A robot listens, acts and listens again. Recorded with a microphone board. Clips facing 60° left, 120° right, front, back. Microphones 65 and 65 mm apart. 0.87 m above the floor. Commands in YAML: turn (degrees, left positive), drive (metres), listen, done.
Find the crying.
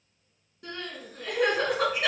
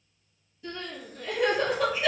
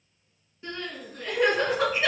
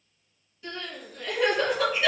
turn: 55
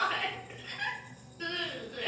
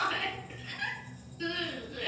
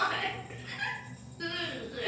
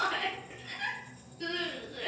done: "Found it: crying, straight ahead, 1 to 2 m away."